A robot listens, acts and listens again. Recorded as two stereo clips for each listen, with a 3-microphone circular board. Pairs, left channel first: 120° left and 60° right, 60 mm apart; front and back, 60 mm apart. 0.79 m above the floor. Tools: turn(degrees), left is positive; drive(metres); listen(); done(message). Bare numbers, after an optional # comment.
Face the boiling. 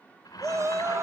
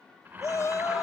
# The boiling: 125° left.
turn(125)
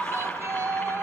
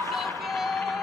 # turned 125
listen()
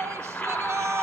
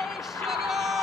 # The boiling is now 55° left.
turn(55)
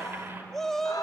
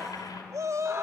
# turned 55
done("Found it: boiling, straight ahead, over 4 m away.")